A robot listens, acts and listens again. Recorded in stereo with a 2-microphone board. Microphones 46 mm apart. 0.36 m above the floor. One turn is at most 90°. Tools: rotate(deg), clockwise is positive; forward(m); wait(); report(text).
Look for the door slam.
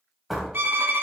rotate(-30)
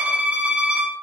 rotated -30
wait()
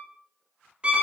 report("I heard a door slam, but can't make it out now. It was about 30° right or 150° left.")